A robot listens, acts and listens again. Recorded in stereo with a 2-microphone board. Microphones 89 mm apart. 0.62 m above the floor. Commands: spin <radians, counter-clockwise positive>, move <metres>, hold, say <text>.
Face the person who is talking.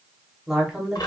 spin -0.52
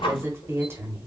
spin -2.53
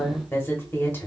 spin 0.52
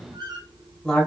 spin 0.17
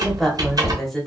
say Facing the woman speaking.